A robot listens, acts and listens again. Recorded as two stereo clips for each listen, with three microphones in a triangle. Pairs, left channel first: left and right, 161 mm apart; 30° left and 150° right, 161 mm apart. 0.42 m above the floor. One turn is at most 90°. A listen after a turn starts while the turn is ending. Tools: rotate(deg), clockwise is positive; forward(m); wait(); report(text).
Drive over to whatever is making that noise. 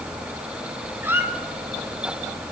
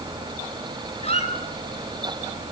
rotate(15)
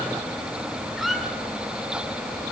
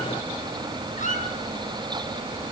forward(1.0)
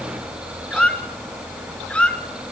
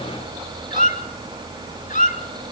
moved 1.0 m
rotate(-10)
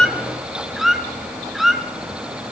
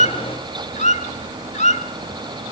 forward(1.0)
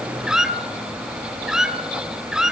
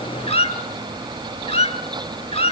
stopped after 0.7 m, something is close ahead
report("Arrived at the squeak, straight ahead.")